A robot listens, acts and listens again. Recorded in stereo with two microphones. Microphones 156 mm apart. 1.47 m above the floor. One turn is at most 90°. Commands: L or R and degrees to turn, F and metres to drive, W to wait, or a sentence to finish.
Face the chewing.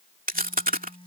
R65
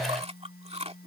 R45
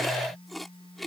Facing the chewing.